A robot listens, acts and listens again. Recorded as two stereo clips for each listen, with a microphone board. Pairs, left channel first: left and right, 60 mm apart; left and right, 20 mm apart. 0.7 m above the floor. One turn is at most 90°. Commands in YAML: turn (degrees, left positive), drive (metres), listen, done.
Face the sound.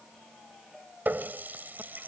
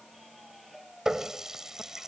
turn: -35
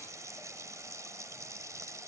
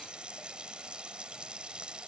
turn: -90
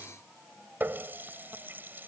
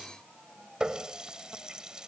turn: -35
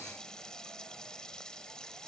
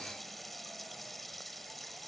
turn: 10
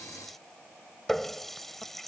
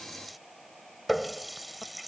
done: "Facing the running tap."